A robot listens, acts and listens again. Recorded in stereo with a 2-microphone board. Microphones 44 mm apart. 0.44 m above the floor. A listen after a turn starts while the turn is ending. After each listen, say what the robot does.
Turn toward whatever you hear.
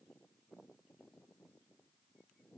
Keep listening.
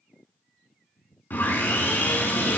Turn 50° left.
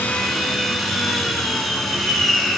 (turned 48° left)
Found it: sawing, straight ahead.